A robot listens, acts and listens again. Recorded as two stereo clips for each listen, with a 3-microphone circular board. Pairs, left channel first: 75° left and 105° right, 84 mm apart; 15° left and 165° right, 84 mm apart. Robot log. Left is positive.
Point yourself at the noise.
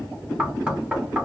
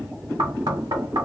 note: The knocking: straight behind.
cmd yaw +180
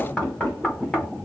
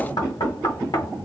end: Facing the knocking, 1 to 2 m away.